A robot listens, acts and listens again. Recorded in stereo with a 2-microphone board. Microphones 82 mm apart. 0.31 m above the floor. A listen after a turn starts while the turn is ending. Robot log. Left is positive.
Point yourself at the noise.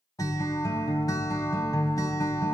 note: The guitar: about 50° left or 130° left.
cmd yaw +50
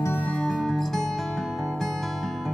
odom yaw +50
end: Found it: a guitar, straight ahead, 1 to 2 m away.